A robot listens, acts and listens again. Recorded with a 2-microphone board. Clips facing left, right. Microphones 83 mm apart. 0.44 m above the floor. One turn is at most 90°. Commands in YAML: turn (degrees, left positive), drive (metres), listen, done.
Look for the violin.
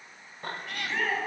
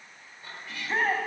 listen: true
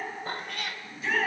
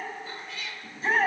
listen: true
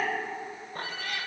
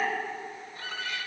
turn: -60
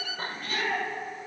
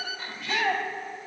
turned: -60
turn: -45
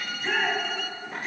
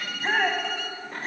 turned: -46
done: "Found it: a violin, straight ahead, under 1 m away."